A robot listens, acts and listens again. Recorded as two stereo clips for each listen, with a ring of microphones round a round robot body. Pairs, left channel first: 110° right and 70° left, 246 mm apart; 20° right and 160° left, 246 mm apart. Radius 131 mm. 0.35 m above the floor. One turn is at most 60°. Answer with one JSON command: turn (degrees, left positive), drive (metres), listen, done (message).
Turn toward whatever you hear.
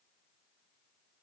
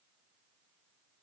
{"listen": true}
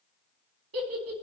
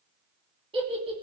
{"turn": 60}
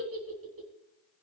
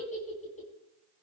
{"turn": 40}
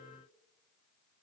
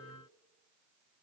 {"turn": -25}
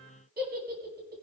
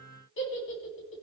{"turn": 15}
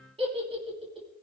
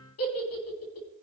{"done": "Facing the giggle, 2 to 4 m away."}